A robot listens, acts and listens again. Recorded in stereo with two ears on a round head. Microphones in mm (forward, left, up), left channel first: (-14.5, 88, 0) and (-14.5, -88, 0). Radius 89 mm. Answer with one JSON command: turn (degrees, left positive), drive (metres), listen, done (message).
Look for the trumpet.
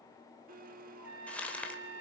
{"turn": -70}
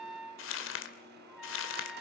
{"done": "Found it: a trumpet, straight ahead."}